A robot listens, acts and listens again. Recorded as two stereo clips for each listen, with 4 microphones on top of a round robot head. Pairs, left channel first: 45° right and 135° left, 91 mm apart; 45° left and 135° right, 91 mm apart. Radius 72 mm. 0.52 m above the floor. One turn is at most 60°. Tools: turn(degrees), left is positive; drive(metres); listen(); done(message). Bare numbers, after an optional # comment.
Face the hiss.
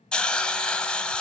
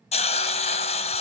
# The hiss: 35° left.
turn(35)
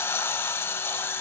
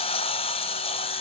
# The hiss is now 25° left.
turn(25)
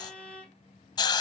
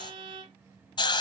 done("Facing the hiss.")